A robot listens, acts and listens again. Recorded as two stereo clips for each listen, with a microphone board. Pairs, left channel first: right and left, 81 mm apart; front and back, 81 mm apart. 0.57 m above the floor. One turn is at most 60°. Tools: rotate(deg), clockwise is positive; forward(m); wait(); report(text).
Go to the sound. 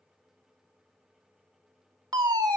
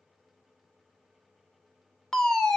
rotate(-60)
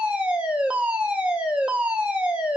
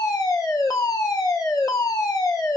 rotate(-20)
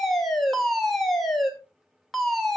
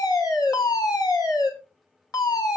forward(1.0)
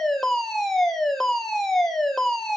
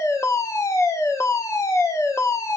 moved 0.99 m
forward(1.0)
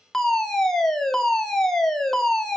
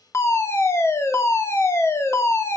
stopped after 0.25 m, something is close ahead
rotate(10)
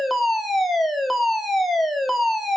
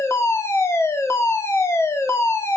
report("Arrived at the fire alarm, straight ahead.")